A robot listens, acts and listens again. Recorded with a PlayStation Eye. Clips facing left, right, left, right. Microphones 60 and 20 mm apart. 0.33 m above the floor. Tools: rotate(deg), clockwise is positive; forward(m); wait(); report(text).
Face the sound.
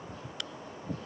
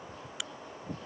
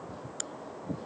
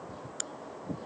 rotate(30)
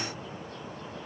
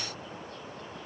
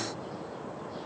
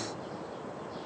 wait()
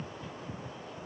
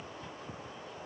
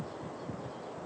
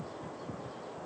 report("I heard a crack, but can't make it out now. It was about 25° left or 145° right.")